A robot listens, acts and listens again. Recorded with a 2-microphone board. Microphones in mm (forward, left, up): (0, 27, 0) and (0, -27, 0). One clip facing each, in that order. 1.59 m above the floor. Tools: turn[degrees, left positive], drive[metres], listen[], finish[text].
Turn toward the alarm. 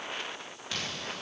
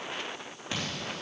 Thought: The alarm: about 15° right or 165° right.
Action: turn[-15]
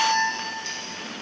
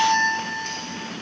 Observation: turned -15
Thought: So it is at 150° right.
Action: turn[-150]
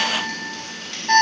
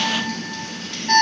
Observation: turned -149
Action: finish[Found it: an alarm, straight ahead, 2 to 4 m away.]